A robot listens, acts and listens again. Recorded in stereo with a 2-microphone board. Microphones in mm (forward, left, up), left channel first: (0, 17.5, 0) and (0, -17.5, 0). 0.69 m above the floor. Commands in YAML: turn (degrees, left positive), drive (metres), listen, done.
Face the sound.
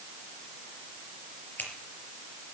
turn: 60
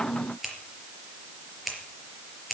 done: "Facing the scissors, over 4 m away."